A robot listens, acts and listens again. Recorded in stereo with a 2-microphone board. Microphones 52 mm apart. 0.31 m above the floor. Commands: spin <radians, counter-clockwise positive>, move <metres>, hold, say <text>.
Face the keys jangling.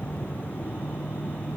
hold
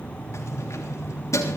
spin 1.31
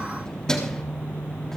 spin 0.17
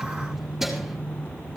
hold
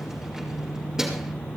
spin -0.17
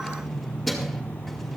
say Facing the keys jangling, over 4 m away.